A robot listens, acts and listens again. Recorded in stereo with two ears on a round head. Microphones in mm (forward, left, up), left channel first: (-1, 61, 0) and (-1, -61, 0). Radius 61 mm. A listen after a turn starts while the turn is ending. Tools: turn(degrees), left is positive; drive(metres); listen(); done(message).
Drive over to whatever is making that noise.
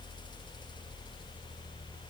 listen()
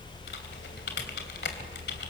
turn(degrees=90)
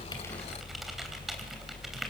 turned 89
listen()
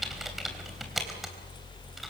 drive(metres=1.0)
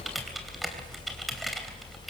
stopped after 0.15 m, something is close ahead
done("Blocked. The typing on a keyboard is further on, straight ahead.")